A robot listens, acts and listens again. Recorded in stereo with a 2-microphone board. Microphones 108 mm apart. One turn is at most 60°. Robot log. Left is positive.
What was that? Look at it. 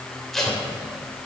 cmd yaw +30
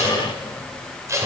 note: So it is at 30° right.
cmd yaw -30
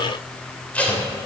note: The tape being pulled is now 15° left.
cmd yaw +15
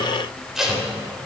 end: Facing the tape being pulled.